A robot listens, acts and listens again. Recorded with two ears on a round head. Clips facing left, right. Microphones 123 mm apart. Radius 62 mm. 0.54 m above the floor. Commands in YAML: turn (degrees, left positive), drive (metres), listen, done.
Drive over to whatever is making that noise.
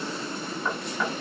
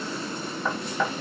turn: -70
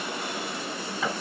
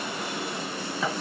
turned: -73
drive: 1.0
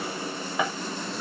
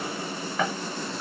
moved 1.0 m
turn: 10
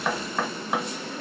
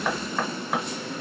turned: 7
drive: 1.0
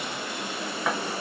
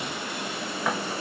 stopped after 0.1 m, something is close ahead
done: "Arrived at the knocking, straight ahead."